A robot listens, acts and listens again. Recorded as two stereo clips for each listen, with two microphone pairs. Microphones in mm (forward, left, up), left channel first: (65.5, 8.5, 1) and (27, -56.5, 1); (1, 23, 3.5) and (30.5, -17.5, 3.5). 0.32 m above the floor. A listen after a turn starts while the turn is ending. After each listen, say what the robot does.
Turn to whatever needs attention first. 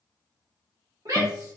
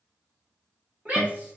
Turn 105° right.
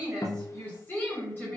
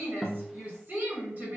Facing the shout.